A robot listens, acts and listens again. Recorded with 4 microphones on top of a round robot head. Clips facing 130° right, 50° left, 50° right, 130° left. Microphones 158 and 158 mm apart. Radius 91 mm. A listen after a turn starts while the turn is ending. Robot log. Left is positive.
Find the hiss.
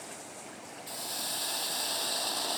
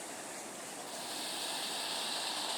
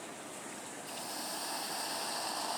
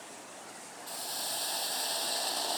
note: The hiss: 170° right.
cmd yaw -170
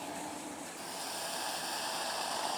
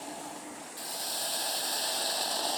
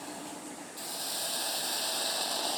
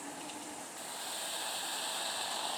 end: Facing the hiss.